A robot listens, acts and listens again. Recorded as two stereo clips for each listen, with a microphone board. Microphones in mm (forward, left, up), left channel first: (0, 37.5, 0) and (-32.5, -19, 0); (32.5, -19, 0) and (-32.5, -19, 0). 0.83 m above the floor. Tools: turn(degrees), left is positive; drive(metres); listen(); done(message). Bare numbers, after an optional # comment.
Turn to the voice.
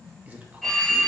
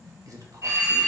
# The man speaking: 175° left.
turn(175)
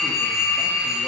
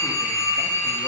listen()
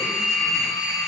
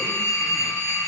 listen()
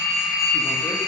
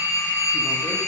done("I heard a man speaking from this way, but can't make it out now.")